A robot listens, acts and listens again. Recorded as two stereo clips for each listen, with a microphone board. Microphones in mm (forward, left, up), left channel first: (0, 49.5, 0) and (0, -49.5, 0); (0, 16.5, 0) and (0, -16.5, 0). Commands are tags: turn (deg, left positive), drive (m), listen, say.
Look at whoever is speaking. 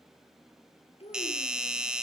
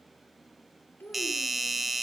<turn deg="90"/>
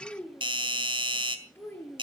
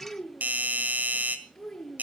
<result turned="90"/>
<turn deg="20"/>
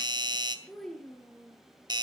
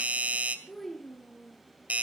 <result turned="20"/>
<turn deg="10"/>
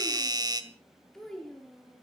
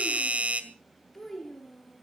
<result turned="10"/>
<say>Found it: a child speaking, straight ahead, over 4 m away.</say>